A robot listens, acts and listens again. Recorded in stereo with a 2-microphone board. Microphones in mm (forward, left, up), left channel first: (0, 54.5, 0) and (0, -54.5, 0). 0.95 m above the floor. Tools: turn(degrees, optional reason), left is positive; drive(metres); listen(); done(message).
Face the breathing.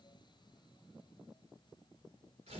listen()
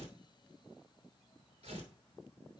listen()
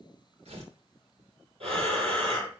turn(degrees=-60, reason="The breathing: about 60° right or 120° right.")
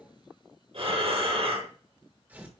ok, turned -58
turn(degrees=-60, reason="So it is at 60° right.")
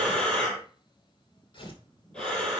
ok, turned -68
done("Facing the breathing, over 4 m away.")